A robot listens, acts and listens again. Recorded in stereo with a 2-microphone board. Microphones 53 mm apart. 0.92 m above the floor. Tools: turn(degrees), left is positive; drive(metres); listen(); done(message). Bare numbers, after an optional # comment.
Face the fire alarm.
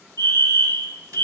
# The fire alarm: about 60° left or 120° left.
turn(60)
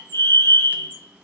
# So it is at 55° left.
turn(55)
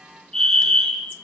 # The fire alarm is now 10° left.
turn(10)
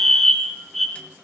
done("Facing the fire alarm.")